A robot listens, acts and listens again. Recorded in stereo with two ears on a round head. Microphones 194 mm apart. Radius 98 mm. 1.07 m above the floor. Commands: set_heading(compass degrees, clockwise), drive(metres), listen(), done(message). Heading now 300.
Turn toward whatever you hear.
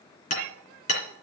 set_heading(265)
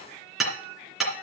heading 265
done("Facing the hammering, 2 to 4 m away.")